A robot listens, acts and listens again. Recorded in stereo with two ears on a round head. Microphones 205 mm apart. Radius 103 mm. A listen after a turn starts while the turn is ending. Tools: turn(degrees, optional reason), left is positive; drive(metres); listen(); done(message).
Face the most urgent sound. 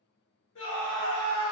turn(degrees=60, reason="The scream: about 60° left or 120° left.")
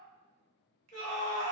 turn(degrees=40, reason="So it is at 40° left.")
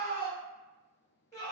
turn(degrees=15, reason="The scream is now 15° left.")
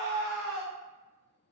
done("Facing the scream.")